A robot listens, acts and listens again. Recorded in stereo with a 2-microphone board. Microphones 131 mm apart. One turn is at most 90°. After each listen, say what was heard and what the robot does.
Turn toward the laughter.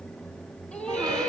Turn 30° left.
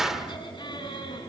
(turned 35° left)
So it is at 140° left. Turn 90° left.
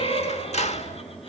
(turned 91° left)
The laughter is now 50° left. Turn 50° left.
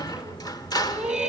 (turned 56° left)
Facing the laughter.